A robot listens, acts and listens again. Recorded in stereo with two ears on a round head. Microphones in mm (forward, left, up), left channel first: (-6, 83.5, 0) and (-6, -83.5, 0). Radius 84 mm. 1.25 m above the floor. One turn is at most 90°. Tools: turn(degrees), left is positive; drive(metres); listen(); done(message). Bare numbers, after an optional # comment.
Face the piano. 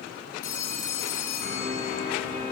# The piano: about 50° left or 130° left.
turn(50)
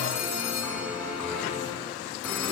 done("Facing the piano, over 4 m away.")